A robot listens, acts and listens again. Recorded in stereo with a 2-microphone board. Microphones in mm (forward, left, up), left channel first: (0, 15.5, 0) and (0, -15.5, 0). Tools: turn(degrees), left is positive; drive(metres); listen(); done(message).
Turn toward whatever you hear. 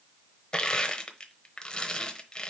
turn(degrees=30)
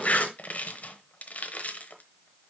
turn(degrees=120)
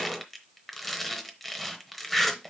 done("Found it: crushing, straight ahead, under 1 m away.")